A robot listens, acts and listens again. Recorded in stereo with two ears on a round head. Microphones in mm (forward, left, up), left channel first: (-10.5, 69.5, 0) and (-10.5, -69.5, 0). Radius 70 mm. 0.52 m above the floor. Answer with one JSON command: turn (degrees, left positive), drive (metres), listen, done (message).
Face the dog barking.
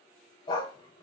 {"turn": 25}
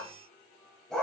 {"done": "Facing the dog barking, under 1 m away."}